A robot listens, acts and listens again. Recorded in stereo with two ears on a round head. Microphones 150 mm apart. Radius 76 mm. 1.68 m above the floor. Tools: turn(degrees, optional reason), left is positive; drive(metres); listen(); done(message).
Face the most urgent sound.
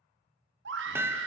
turn(degrees=-90)
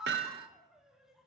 done("Facing the scream.")